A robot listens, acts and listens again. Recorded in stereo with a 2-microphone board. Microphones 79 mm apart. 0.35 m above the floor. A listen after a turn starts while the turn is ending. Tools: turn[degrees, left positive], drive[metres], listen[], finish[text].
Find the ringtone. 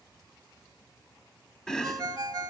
Thought: The ringtone: about 45° right or 135° right.
Action: turn[-45]
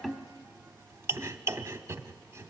Action: listen[]
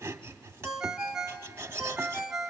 Action: finish[Facing the ringtone, 1 to 2 m away.]